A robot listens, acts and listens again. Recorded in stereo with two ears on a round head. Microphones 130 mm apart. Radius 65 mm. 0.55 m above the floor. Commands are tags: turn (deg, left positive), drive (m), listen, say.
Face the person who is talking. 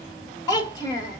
<turn deg="25"/>
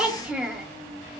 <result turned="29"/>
<say>Found it: a child speaking, straight ahead.</say>